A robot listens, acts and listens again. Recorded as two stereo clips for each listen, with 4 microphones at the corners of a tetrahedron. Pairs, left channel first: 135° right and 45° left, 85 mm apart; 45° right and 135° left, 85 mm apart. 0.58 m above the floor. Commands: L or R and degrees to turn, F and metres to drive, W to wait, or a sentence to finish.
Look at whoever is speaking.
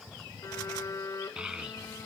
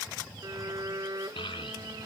R35
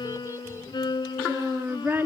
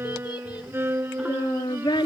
R20
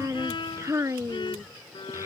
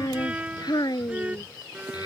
R10
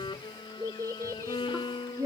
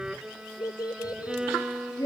Found it: a child speaking, straight ahead.